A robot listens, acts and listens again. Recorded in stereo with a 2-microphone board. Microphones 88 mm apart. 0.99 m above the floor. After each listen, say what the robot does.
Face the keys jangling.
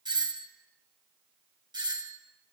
Keep listening.
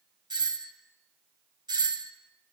Keep listening.
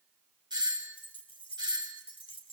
Turn 90° left.
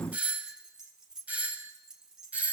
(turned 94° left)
Facing the keys jangling.